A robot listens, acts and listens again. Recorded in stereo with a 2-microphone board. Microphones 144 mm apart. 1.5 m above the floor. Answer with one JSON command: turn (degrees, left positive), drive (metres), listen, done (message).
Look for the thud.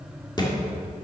{"turn": 30}
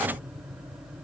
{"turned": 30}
{"listen": true}
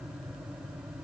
{"done": "I heard a thud, but can't make it out now. It was about straight ahead or 120° left."}